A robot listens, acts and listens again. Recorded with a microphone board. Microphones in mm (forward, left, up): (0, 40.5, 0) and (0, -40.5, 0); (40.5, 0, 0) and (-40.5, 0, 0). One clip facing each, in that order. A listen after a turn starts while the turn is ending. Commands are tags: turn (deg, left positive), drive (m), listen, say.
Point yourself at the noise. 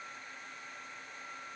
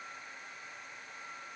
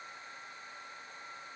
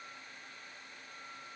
<listen/>
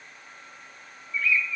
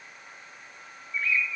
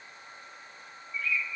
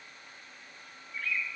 <turn deg="-150"/>
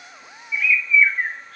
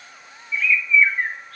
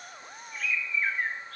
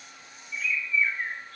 <say>Facing the bird.</say>